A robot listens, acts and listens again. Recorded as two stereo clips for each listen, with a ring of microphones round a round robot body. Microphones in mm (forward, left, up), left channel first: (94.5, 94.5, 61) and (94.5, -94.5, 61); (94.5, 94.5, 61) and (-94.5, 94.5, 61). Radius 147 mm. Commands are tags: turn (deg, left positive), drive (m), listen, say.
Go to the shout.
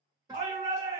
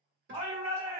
<turn deg="-120"/>
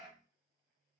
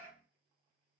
<drive m="1.0"/>
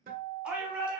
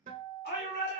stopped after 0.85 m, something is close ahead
<say>Arrived at the shout, straight ahead.</say>